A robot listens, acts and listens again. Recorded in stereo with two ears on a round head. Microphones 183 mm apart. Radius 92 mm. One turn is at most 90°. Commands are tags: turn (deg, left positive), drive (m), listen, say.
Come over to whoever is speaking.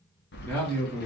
<turn deg="30"/>
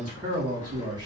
<turn deg="-20"/>
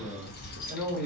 <drive m="1.0"/>
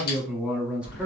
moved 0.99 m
<drive m="1.0"/>
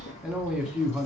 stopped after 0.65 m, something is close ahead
<say>I am next to the man speaking.</say>